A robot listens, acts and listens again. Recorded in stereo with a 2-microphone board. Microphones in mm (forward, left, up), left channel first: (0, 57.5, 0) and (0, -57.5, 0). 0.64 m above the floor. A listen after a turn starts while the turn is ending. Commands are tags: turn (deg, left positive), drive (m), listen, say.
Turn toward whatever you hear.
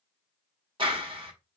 <turn deg="-50"/>
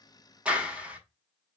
<turn deg="-10"/>
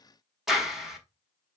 <say>Facing the clap.</say>